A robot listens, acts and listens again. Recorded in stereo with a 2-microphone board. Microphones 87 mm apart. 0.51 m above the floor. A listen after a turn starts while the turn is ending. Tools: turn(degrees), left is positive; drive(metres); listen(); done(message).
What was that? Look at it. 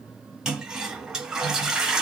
turn(degrees=-30)
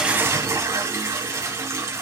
turn(degrees=-145)
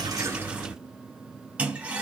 turn(degrees=-15)
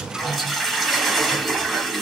done("Found it: a toilet flushing, straight ahead, 1 to 2 m away.")